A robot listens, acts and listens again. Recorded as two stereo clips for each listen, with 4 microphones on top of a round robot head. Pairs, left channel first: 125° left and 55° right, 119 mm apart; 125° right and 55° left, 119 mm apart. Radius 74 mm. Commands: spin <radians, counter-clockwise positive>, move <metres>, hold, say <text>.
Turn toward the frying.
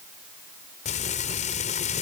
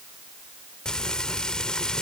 spin 2.62
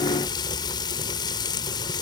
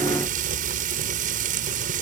spin 1.13
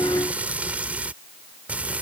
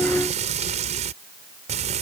spin 0.44
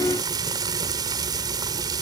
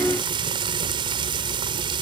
say Facing the frying.